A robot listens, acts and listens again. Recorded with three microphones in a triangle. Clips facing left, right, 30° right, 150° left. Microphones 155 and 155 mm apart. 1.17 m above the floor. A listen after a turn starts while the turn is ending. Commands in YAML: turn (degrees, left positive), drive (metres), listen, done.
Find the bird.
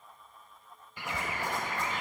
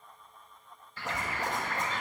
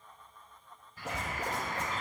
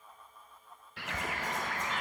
turn: 165
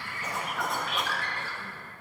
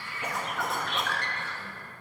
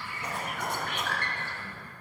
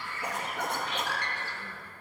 done: "Found it: a bird, straight ahead."